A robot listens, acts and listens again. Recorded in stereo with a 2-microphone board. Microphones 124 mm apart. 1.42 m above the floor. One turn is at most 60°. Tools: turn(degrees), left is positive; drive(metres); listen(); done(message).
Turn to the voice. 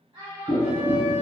turn(degrees=-35)
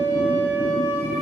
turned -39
listen()
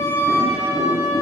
listen()
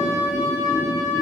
done("I heard a child speaking, but can't make it out now. It was about straight ahead or 105° right.")